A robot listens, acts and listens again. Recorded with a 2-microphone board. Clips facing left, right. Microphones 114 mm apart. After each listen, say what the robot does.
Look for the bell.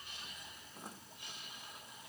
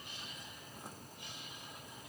Keep listening.
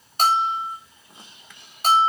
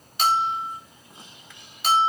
Turn 40° left.
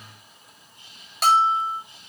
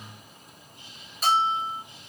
Turn 100° left.
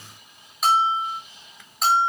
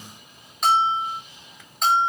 Facing the bell.